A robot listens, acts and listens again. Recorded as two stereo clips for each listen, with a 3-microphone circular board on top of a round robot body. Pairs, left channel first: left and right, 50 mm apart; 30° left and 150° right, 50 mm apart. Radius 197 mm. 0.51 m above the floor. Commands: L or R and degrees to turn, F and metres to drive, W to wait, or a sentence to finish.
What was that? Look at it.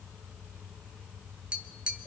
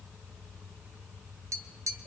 R160
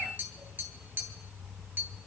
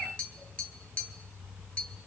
R40
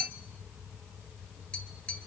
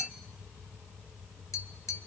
L15
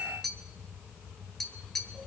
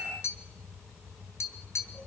Facing the tapping, 1 to 2 m away.